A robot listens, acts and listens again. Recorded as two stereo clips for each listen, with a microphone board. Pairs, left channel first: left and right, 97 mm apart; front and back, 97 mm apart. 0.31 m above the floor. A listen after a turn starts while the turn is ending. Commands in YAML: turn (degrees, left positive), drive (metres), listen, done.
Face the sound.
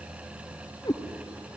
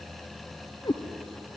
turn: 40
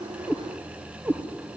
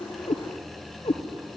turn: -20
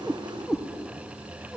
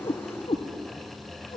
done: "Facing the cat meowing."